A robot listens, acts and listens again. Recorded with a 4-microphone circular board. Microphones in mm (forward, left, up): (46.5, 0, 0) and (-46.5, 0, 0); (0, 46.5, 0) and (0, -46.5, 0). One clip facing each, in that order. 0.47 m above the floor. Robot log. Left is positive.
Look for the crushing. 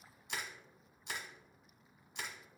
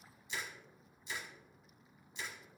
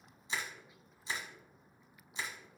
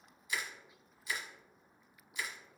note: The crushing: 25° left.
cmd yaw +25
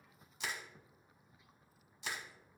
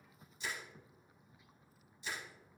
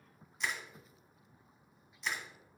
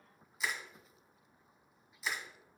end: Found it: crushing, straight ahead, 1 to 2 m away.